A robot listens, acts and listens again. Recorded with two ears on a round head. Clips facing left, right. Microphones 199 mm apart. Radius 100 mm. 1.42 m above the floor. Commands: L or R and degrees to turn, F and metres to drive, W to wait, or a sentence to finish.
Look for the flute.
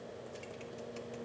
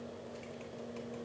W
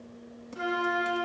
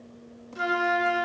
R60
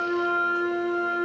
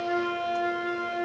R55
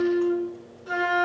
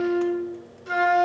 R35
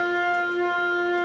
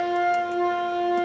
Found it: a flute, straight ahead, 1 to 2 m away.